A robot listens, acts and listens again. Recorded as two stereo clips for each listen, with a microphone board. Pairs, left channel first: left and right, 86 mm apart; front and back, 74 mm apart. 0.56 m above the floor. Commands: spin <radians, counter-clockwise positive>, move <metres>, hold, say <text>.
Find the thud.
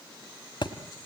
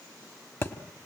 spin 0.96
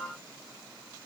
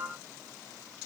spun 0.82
spin 0.17
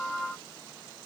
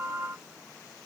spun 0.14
say Facing where the thud came from. I can't hear it now.